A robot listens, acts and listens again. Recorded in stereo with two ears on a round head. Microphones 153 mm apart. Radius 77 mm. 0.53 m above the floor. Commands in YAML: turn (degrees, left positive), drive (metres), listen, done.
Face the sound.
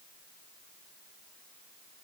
listen: true
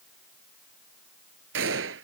turn: -90
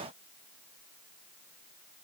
done: "Facing where the gunshot came from. I can't hear it now."